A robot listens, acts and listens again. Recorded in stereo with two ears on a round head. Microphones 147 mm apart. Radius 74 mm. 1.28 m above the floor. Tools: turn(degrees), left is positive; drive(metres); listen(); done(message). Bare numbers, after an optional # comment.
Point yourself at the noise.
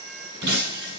# The breaking glass: about 70° right or 110° right.
turn(-70)
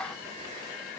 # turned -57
listen()
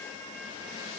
done("I heard breaking glass, but can't make it out now. It was about 10° right or 55° right.")